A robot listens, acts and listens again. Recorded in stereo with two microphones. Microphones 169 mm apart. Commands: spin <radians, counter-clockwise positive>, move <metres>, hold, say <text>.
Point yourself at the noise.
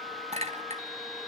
spin -0.70
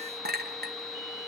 spin -1.75
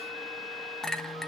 say Found it: a clink, straight ahead, 1 to 2 m away.